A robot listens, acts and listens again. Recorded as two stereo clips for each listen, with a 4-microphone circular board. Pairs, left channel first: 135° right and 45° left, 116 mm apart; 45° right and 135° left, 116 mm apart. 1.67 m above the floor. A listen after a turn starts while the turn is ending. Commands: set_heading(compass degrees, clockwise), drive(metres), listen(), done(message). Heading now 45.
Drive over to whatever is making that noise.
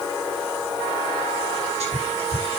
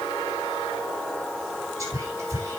set_heading(335)
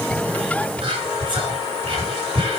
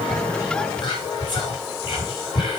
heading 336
drive(1.0)
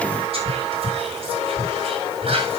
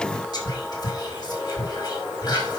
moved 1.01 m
set_heading(326)
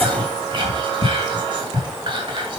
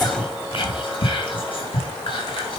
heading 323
drive(1.0)
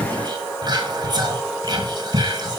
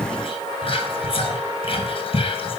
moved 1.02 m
set_heading(333)
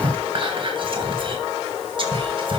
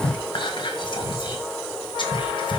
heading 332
drive(1.0)
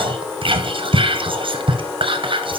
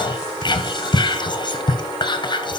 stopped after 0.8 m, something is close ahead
done("I am next to the whispering.")